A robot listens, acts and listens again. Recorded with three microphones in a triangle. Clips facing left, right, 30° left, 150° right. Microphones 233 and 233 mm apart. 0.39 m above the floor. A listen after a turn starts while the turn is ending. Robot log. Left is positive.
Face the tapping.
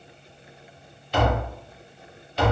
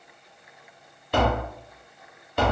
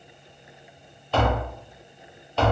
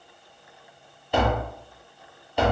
note: The tapping: 75° right.
cmd yaw -75
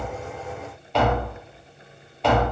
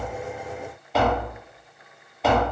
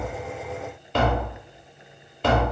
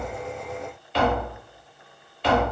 end: Facing the tapping, under 1 m away.